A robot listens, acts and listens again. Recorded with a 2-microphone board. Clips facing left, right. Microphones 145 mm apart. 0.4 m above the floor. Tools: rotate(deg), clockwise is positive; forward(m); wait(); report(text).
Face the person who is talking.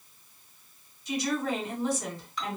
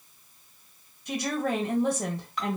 rotate(60)
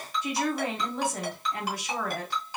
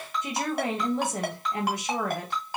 rotate(25)
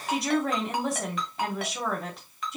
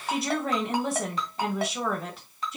report("Found it: a woman speaking, straight ahead, 1 to 2 m away.")